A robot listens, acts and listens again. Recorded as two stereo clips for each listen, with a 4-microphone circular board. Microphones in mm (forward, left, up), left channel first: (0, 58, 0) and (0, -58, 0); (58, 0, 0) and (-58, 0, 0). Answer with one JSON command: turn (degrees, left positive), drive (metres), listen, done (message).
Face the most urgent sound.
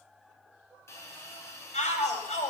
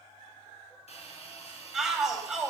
{"turn": 95}
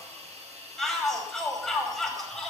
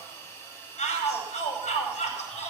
{"done": "Facing the shout."}